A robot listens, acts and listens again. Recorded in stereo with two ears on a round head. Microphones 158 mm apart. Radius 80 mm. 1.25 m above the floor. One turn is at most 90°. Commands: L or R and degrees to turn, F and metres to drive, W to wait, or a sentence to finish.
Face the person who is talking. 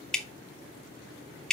W
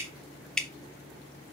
W
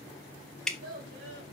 R65
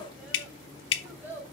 R10
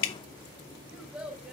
Found it: a child speaking, straight ahead, 2 to 4 m away.